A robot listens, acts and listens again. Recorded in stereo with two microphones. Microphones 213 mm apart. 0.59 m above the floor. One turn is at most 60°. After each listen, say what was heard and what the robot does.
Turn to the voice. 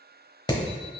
Keep listening.
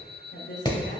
The woman speaking: about 60° left or 120° left. Turn 60° left.
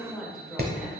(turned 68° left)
Found it: a woman speaking, straight ahead.